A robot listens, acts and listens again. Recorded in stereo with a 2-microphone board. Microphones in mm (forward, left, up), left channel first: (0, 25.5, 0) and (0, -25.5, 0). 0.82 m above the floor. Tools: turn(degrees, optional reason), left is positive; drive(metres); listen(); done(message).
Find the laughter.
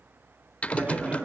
turn(degrees=-25, reason="The laughter: about 25° right or 155° right.")
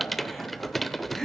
turn(degrees=10, reason="So it is at 10° left.")
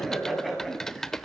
done("Facing the laughter, over 4 m away.")